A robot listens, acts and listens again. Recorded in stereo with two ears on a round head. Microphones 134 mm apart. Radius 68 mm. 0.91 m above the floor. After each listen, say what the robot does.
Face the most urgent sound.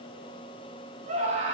Turn 50° right.
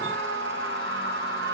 Turn 80° right.
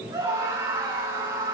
Turn 20° right.
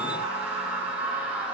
Turn 10° right.
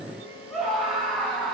Found it: a scream, straight ahead.